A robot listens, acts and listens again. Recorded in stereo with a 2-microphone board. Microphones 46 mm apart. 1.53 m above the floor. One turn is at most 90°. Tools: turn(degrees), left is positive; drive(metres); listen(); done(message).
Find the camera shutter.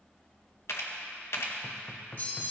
turn(degrees=70)
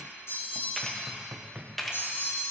done("Found it: a camera shutter, straight ahead.")